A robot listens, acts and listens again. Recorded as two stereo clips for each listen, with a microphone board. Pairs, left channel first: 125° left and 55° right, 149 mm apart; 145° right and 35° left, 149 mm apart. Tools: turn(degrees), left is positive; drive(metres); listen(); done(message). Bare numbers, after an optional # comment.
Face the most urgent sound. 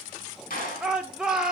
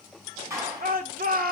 # The shout: 30° left.
turn(30)
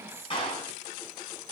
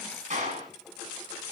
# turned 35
listen()
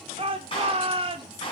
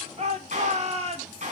done("Facing the shout.")